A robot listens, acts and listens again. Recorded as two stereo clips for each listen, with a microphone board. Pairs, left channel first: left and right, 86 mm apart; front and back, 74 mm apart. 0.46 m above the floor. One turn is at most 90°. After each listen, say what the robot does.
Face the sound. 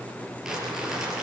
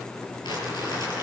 Found it: crumpling, straight ahead, over 4 m away.